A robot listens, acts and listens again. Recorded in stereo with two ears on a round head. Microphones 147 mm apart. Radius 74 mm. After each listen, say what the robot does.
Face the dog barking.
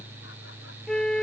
Keep listening.
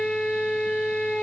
Keep listening.
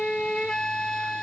I can't make out a dog barking to turn to.